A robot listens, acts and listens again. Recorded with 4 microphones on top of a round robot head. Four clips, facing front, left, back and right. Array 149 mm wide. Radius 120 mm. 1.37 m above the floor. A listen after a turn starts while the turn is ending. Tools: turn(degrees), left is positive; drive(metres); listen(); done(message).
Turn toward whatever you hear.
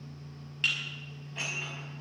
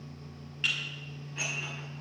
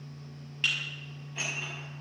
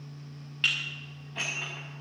turn(degrees=-75)
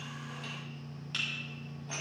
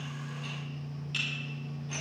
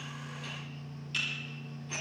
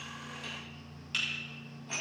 turn(degrees=-35)
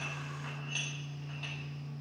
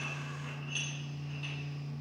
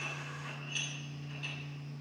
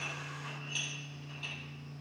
done("Found it: dishes clattering, straight ahead.")